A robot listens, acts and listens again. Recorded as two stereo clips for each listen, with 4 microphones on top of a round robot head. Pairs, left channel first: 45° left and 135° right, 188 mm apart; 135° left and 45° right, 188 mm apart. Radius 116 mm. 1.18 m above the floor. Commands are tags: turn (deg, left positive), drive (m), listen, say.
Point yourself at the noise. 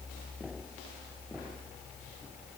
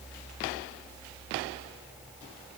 <listen/>
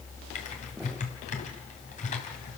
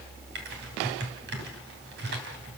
<turn deg="-10"/>
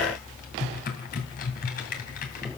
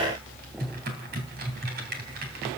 <say>Found it: typing on a keyboard, straight ahead, 2 to 4 m away.</say>